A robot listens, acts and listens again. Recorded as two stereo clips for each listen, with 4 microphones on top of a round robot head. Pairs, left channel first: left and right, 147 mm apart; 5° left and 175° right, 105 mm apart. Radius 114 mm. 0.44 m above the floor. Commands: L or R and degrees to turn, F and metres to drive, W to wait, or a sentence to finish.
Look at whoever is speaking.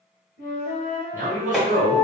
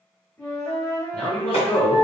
R70
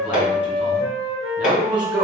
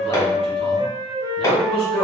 R10
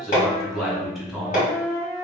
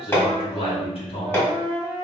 Facing the man speaking, 1 to 2 m away.